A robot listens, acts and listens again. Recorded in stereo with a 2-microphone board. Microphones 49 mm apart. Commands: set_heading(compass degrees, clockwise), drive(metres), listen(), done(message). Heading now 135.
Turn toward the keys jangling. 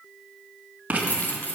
set_heading(80)
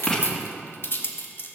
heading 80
set_heading(30)
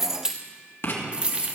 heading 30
set_heading(60)
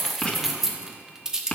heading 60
set_heading(75)
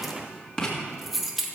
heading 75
done("Found it: keys jangling, straight ahead, 1 to 2 m away.")